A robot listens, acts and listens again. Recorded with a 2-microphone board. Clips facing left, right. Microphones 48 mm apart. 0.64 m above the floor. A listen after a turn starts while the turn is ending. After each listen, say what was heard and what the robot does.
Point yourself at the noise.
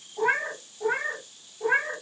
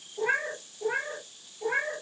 Turn 90° left.
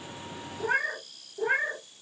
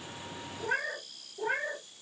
So it is at 30° left. Turn 30° left.
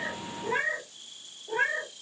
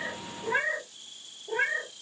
The cat meowing is now 10° right. Turn 10° right.
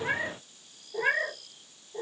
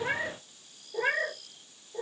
Facing the cat meowing, 2 to 4 m away.